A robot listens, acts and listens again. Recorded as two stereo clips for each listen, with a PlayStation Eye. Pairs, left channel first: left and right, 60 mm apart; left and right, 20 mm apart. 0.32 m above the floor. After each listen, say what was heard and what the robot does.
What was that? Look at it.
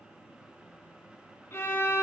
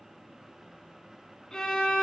The violin: about 45° left or 135° left. Turn 45° left.
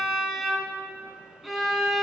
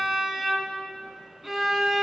Found it: a violin, straight ahead.